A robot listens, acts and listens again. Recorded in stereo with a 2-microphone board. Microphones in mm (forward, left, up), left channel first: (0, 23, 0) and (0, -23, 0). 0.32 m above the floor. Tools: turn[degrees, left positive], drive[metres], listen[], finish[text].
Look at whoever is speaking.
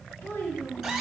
Thought: The child speaking: about 60° left or 120° left.
Action: turn[60]
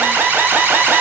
Action: listen[]
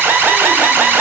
Action: listen[]
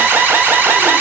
Action: finish[I heard a child speaking, but can't make it out now. It was about straight ahead or 60° left.]